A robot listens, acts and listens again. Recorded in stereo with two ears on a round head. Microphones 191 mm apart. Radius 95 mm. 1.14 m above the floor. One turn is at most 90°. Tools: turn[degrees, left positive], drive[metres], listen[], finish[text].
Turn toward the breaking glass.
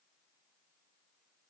Action: listen[]
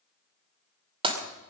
Thought: The breaking glass: about 25° right or 155° right.
Action: turn[-25]
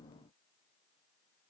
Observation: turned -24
Action: listen[]
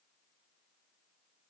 Action: finish[I heard breaking glass, but can't make it out now. It was about straight ahead or 130° right.]